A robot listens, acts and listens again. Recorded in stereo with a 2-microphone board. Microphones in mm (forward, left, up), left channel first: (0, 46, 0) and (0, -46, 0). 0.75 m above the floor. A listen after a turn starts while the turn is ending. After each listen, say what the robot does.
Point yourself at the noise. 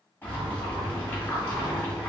Turn 20° left.
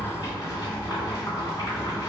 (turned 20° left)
Turn 135° left.
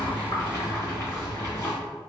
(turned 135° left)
Turn 35° left.
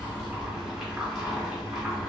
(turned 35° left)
Turn 10° right.
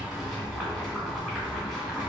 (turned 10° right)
Facing the boiling.